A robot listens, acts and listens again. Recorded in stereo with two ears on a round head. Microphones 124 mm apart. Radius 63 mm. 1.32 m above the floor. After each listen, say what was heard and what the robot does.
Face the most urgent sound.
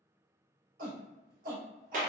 The shout: about 70° right or 110° right. Turn 70° right.
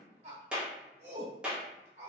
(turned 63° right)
So it is at 45° right. Turn 45° right.
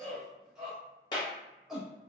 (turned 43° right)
Facing the shout.